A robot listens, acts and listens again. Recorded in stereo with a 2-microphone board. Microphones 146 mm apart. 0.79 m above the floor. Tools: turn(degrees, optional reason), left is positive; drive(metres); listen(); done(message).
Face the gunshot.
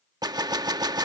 turn(degrees=-25, reason="The gunshot: about 25° right or 155° right.")
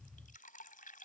listen()
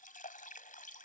done("I heard a gunshot, but can't make it out now. It was about straight ahead or 130° right.")